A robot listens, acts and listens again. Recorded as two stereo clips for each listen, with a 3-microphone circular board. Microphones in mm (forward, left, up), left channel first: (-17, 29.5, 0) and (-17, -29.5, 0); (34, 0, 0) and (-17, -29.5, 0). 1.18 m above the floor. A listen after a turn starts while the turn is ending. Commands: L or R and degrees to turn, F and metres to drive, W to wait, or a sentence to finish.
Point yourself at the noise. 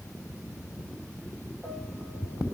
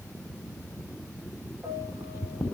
W
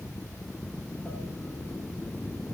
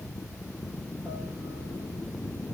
W
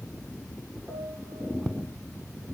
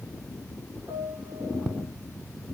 R155
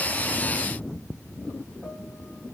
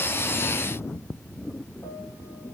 W
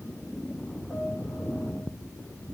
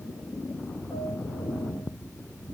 W
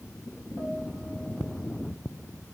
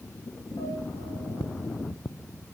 I heard a piano from this way, but can't make it out now.